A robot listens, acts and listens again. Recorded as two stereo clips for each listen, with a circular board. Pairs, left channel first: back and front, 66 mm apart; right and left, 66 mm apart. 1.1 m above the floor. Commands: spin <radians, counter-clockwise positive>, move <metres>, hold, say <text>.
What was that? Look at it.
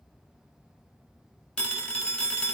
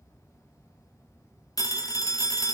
spin -1.83
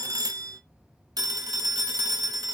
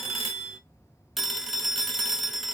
say Facing the phone ringing, under 1 m away.